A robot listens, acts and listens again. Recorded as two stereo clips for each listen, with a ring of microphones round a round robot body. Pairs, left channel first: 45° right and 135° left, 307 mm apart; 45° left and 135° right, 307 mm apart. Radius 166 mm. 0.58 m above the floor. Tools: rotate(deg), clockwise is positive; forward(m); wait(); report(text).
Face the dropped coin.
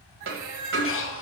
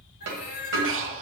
rotate(175)
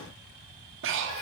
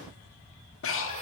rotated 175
report("I heard a dropped coin from this way, but can't make it out now.")